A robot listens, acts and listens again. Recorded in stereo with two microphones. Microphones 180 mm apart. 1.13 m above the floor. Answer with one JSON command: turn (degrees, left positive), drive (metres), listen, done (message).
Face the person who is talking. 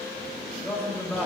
{"turn": 30}
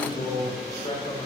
{"turn": 140}
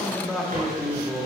{"done": "Found it: a man speaking, straight ahead, 2 to 4 m away."}